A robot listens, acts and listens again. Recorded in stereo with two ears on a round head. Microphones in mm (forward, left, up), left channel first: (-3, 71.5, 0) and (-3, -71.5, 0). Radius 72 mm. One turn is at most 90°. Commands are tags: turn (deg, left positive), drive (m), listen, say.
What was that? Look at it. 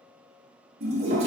<turn deg="-40"/>
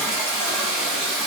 <say>Facing the toilet flushing.</say>